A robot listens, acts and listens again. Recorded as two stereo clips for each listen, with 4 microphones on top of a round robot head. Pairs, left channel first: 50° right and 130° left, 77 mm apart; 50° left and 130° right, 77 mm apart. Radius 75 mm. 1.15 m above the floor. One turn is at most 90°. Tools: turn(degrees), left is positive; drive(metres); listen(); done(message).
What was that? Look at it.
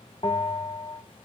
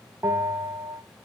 turn(degrees=-75)
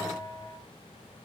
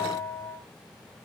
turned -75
turn(degrees=-25)
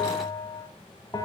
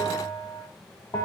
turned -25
done("Found it: a bell, straight ahead, over 4 m away.")